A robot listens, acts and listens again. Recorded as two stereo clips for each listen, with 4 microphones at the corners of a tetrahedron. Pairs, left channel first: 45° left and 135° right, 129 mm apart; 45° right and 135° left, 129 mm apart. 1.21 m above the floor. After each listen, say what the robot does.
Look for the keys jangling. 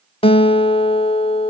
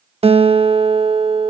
Keep listening.
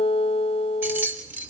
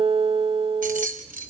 Turn 150° left.
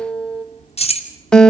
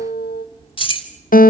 Facing the keys jangling, 2 to 4 m away.